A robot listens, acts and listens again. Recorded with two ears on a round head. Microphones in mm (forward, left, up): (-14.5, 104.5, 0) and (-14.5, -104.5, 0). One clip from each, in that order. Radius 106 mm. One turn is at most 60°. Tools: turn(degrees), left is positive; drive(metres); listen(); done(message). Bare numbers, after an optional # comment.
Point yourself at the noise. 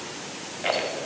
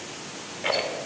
turn(30)
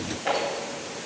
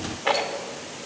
# So it is at 25° right.
turn(-25)
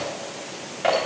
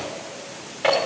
# The rattle is now 15° right.
turn(-15)
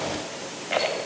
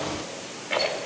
done("Found it: a rattle, straight ahead.")